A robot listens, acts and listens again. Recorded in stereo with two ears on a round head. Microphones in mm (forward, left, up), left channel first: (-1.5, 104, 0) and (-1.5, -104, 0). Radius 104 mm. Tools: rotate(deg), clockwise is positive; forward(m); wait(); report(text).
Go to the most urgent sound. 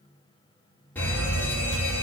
rotate(-30)
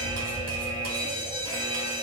rotate(20)
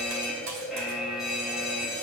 forward(1.0)
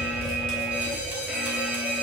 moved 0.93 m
forward(1.0)
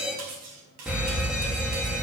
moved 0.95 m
forward(1.0)
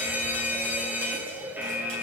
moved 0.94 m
rotate(10)
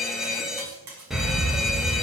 forward(1.0)
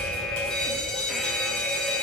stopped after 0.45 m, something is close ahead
report("I am next to the fire alarm.")